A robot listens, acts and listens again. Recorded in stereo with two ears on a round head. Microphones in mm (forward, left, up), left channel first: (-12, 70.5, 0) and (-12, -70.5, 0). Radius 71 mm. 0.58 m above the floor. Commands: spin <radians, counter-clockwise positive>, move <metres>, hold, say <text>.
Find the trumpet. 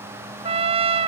spin -0.70
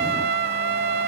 spin -1.75
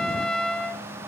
say Found it: a trumpet, straight ahead.